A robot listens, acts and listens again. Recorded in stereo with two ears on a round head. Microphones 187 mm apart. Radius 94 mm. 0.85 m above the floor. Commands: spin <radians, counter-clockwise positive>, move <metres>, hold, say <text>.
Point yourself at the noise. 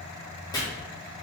spin 0.35
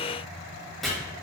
say Facing the chopping, 1 to 2 m away.